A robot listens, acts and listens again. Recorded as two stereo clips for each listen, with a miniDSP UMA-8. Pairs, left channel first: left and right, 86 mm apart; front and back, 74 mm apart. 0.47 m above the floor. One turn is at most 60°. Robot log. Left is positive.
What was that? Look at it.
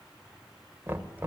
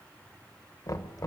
note: The knocking: 30° right.
cmd yaw -30
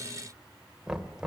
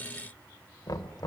note: The knocking is now 10° right.
cmd yaw -10
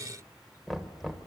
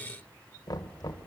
end: Found it: knocking, straight ahead, 1 to 2 m away.